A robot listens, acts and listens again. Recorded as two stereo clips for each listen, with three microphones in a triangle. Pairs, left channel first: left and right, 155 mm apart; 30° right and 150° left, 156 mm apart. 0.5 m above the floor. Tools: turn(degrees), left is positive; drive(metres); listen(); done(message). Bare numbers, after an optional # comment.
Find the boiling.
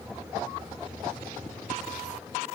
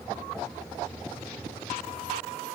listen()
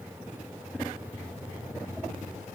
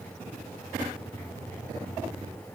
listen()
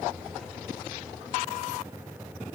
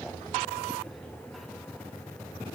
done("I can't make out boiling to turn to.")